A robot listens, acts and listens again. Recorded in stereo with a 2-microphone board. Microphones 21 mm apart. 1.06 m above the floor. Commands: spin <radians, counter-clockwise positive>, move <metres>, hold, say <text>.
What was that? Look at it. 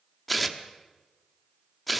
spin 0.52
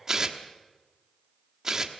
spin -0.44
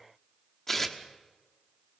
spin 0.17
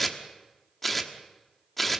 say Facing the tearing paper.